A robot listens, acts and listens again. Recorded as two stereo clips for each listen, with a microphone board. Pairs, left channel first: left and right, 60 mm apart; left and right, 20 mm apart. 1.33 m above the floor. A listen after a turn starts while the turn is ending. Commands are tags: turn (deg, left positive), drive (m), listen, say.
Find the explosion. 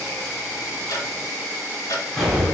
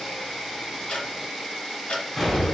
<turn deg="30"/>
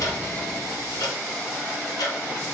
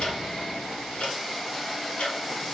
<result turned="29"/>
<listen/>
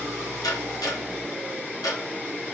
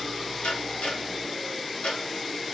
<say>I heard an explosion, but can't make it out now. It was about 15° right or 140° left.</say>